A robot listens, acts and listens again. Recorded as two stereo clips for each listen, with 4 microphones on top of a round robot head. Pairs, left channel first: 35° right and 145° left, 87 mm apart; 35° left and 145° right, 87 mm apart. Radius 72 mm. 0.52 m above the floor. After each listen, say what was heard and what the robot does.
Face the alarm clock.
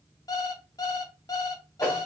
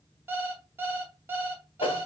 The alarm clock: 80° right. Turn 80° right.
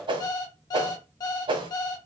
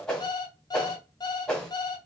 Facing the alarm clock, under 1 m away.